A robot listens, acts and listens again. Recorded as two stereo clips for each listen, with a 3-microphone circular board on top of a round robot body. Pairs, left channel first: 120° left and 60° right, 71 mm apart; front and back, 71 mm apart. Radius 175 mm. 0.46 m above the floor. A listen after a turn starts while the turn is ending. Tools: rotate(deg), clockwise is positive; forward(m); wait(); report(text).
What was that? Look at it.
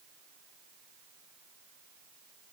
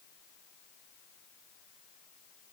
wait()
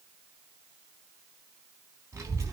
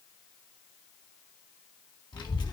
rotate(10)
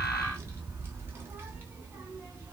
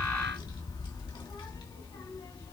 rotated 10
report("Facing the child speaking.")